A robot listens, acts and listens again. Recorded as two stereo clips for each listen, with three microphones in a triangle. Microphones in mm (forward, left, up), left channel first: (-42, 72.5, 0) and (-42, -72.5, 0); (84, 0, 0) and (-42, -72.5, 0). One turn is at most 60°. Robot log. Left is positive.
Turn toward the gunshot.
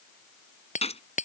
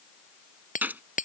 note: The gunshot: 130° left.
cmd yaw +60
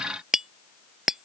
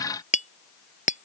note: Nothing new. It was at 70° left.
cmd yaw +60
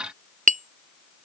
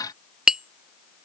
note: Nothing new. It was at 10° left.
cmd yaw +10
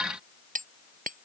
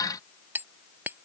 end: I heard a gunshot from this way, but can't make it out now.